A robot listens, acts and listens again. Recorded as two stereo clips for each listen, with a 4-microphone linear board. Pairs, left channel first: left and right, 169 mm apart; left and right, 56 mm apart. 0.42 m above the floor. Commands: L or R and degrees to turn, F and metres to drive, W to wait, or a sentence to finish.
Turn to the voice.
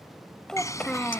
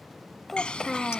L30
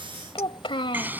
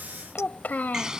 L145
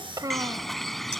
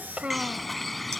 R25
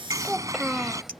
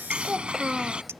Facing the child speaking.